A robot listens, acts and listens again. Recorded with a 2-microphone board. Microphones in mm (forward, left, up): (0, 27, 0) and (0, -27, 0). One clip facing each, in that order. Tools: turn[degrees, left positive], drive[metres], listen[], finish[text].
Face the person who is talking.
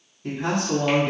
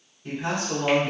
Thought: The man speaking: about 60° left or 120° left.
Action: turn[60]
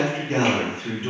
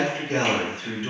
Thought: So it is at 35° left.
Action: turn[35]
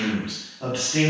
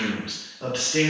Thought: The man speaking is now 10° left.
Action: turn[10]
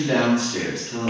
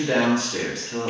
Action: finish[Found it: a man speaking, straight ahead.]